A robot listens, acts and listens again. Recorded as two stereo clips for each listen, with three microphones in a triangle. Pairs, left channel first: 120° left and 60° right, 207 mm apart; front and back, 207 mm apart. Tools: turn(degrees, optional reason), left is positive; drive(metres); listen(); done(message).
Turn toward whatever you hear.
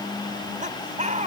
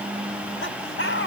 done("Facing the laughter.")